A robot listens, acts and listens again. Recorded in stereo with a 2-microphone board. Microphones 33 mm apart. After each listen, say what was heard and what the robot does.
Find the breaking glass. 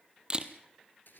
Keep listening.
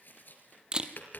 Keep listening.
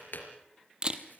I can't make out breaking glass, only tapping and a camera shutter.